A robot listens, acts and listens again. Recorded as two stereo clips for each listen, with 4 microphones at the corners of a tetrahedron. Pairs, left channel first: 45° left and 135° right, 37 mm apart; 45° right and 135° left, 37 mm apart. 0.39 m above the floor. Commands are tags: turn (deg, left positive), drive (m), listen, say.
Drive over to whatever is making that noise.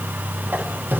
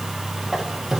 <turn deg="-145"/>
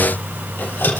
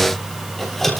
<turn deg="40"/>
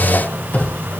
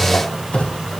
<turn deg="15"/>
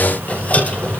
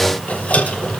<drive m="1.0"/>
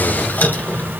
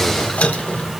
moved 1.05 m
<turn deg="10"/>
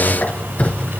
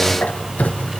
<drive m="1.0"/>
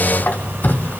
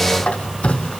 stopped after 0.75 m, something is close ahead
<turn deg="15"/>
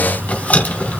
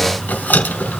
<say>I am next to the squeak.</say>